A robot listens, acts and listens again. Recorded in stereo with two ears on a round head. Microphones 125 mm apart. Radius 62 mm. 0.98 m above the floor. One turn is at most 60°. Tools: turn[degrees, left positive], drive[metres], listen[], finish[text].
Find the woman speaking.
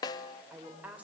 Action: turn[-30]
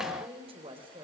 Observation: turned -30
Thought: So it is at 145° right.
Action: turn[-60]
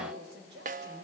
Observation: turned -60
Thought: The woman speaking is now 85° right.
Action: turn[-60]
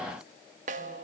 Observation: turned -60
Thought: Nothing new. It was at 25° right.
Action: turn[-25]
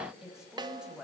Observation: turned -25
Action: finish[Found it: a woman speaking, straight ahead, over 4 m away.]